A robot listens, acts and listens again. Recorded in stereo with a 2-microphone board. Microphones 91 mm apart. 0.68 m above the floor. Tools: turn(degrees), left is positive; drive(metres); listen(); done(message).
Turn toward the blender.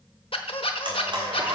turn(degrees=-60)
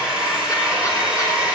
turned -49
turn(degrees=-10)
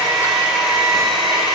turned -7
done("Found it: a blender, straight ahead.")